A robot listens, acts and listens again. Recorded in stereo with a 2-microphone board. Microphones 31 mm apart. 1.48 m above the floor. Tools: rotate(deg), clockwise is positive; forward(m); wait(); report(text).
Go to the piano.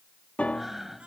rotate(-50)
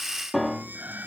forward(1.0)
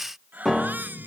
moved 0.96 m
forward(1.0)
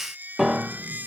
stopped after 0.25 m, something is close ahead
report("Arrived at the piano, straight ahead.")